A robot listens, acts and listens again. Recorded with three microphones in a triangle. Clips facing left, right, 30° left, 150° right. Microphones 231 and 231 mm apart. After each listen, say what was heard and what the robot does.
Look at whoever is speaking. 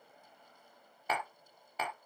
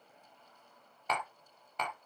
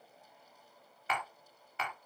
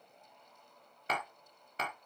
Keep listening.
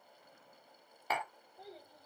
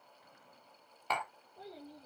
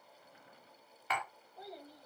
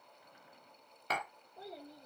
The child speaking: 75° right. Turn 75° right.
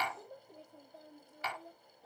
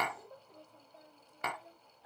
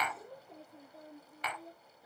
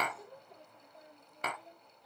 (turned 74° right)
The child speaking is now 50° left. Turn 50° left.
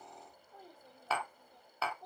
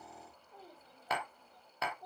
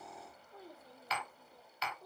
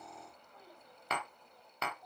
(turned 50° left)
Facing the child speaking.